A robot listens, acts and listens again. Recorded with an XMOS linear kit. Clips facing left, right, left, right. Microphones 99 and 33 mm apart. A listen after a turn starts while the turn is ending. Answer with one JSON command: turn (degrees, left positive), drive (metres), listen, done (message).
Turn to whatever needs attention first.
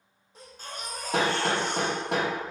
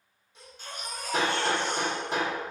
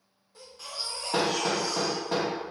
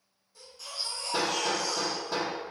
{"turn": 40}
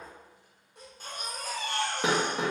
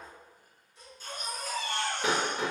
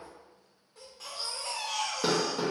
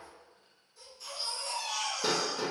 {"turn": 90}
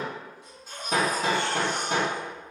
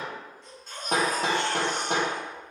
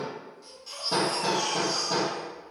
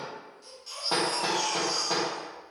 {"done": "Found it: a baby crying, straight ahead."}